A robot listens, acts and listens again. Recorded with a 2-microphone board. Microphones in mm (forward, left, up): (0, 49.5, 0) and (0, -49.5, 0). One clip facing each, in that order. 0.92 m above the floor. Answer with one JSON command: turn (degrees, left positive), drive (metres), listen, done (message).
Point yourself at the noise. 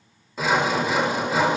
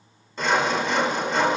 {"turn": 30}
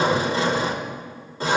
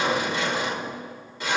{"turn": 145}
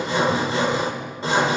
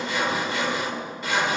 {"turn": 30}
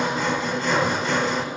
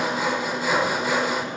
{"done": "Facing the sawing, 1 to 2 m away."}